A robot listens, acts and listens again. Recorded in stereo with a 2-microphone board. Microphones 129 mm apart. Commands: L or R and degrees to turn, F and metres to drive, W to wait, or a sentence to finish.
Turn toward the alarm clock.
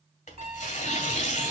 R55
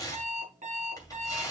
R70
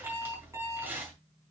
R25
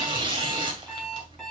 Facing the alarm clock, over 4 m away.